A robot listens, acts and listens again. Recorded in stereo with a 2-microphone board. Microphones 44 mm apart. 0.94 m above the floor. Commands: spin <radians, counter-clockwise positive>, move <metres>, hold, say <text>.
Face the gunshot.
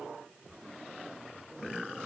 hold
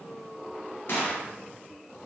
spin 1.05
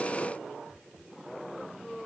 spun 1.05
hold
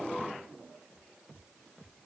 say I heard a gunshot, but can't make it out now. It was about straight ahead or 60° left.